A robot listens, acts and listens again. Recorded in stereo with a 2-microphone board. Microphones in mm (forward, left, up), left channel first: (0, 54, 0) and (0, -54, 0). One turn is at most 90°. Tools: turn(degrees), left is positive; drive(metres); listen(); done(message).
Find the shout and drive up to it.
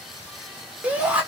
turn(degrees=-30)
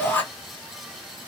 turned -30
turn(degrees=15)
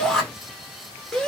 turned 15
drive(metres=1.0)
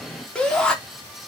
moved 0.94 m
drive(metres=1.0)
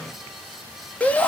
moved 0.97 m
turn(degrees=15)
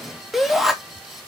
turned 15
drive(metres=1.0)
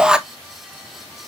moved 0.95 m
turn(degrees=-10)
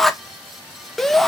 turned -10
drive(metres=1.0)
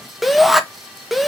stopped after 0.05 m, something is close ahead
done("I am next to the shout.")